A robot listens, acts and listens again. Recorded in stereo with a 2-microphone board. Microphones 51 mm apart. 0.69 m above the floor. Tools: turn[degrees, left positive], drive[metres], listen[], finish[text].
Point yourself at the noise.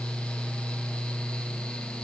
Action: listen[]
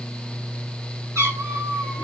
Action: turn[-90]
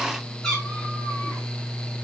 Thought: So it is at 10° left.
Action: turn[10]
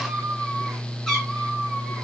Action: finish[Found it: a cat meowing, straight ahead.]